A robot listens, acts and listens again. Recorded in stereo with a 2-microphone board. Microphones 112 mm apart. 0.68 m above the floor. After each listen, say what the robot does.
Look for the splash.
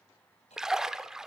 Turn 30° right.
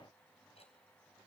Keep listening.
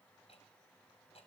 I heard a splash, but can't make it out now. It was about 25° left or 145° right.